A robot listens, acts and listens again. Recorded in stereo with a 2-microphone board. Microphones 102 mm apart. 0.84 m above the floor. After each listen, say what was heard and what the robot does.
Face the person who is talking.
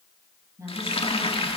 The woman speaking: about 30° right or 150° right. Turn 30° right.
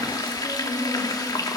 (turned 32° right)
Keep listening.
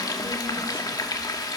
Keep listening.
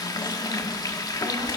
I heard a woman speaking, but can't make it out now. It was about straight ahead or 115° right.